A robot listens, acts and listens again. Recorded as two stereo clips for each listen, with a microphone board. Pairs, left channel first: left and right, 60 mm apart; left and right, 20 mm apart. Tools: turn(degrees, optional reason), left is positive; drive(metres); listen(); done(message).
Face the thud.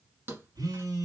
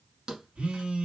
turn(degrees=-35, reason="The thud: about 35° right or 145° right.")
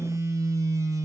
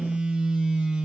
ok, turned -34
listen()
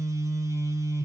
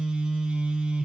done("I heard a thud, but can't make it out now. It was about straight ahead or 110° right.")